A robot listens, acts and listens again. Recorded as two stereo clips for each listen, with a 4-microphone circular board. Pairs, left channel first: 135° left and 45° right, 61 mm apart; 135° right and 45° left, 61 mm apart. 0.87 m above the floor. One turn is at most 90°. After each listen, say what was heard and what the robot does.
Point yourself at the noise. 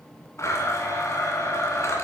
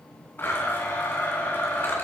The blender: 170° left. Turn 90° left.
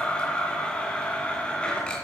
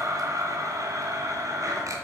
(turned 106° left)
The blender is now 65° left. Turn 65° left.
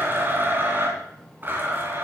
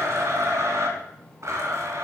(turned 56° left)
The blender is now 10° left. Turn 10° left.
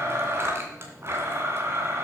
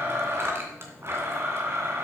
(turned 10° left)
Found it: a blender, straight ahead, 2 to 4 m away.